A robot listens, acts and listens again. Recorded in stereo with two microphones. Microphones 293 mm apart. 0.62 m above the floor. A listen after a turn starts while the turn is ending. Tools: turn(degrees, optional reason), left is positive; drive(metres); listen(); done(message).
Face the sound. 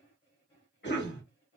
turn(degrees=40, reason="The cough: about 40° left or 140° left.")
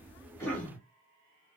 done("Facing the cough.")